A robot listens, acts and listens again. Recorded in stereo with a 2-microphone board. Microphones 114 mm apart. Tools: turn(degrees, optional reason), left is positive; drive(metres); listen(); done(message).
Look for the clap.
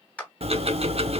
turn(degrees=30)
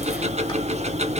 listen()
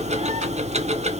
listen()
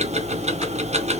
done("I heard a clap, but can't make it out now. It was about 20° right or 140° left.")